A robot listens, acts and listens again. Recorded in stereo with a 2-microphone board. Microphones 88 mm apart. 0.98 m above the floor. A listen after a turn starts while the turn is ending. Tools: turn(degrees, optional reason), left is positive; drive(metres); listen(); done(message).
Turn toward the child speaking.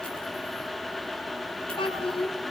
turn(degrees=90)
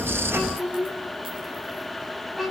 done("Found it: a child speaking, straight ahead, over 4 m away.")